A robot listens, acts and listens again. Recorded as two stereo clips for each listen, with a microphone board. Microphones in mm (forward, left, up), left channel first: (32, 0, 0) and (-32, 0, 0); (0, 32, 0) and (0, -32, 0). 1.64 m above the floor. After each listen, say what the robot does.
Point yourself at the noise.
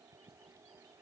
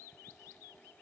Keep listening.
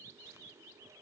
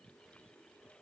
Keep listening.
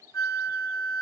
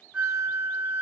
Turn 15° right.
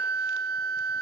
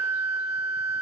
Found it: a flute, straight ahead.